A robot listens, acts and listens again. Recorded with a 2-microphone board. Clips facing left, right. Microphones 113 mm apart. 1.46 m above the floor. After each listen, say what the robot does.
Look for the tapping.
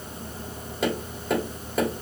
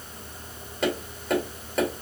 Turn 30° left.
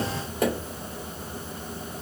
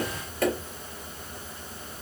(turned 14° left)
Turn 165° left.
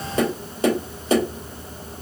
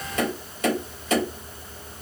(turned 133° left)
Turn 35° left.
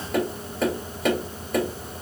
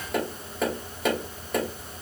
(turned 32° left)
Facing the tapping, 2 to 4 m away.